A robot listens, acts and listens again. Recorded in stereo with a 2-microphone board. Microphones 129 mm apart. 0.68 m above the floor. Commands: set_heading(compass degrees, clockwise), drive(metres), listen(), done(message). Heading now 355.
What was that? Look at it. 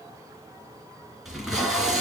set_heading(325)
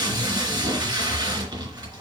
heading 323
set_heading(358)
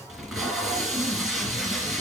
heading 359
done("Facing the tape being pulled.")